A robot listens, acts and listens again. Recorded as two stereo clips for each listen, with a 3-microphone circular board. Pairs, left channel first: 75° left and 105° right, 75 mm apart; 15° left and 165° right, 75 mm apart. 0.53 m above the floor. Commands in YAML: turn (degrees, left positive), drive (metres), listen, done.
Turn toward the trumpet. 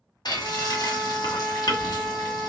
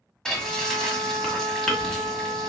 turn: 175
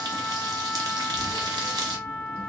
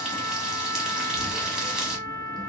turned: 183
done: "Facing the trumpet, 1 to 2 m away."